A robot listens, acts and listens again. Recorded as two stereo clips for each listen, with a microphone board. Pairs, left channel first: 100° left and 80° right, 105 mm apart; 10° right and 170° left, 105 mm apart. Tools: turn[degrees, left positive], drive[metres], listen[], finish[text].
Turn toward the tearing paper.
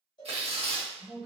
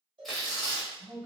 Thought: The tearing paper: 100° right.
Action: turn[-100]
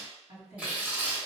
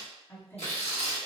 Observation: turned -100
Action: finish[Facing the tearing paper.]